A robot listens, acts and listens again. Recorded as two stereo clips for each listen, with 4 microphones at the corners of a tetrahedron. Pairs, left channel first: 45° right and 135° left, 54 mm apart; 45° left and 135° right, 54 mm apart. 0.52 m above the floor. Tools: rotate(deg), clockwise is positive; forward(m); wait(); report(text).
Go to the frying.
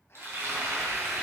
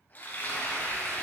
rotate(-100)
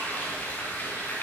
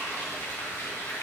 rotate(-10)
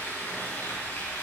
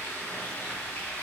forward(1.0)
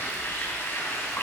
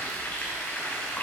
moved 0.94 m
forward(1.0)
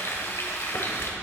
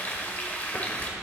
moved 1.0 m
rotate(10)
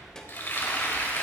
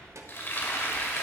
forward(1.0)
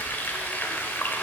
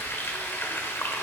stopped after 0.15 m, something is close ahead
report("I am next to the frying.")